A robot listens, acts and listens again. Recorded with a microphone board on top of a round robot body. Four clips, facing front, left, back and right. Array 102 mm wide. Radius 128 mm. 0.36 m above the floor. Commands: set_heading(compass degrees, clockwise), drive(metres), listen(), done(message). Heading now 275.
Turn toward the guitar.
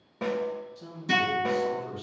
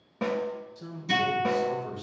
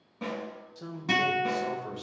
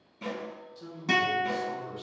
set_heading(40)
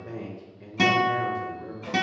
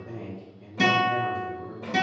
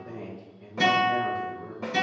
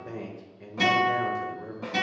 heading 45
done("Facing the guitar.")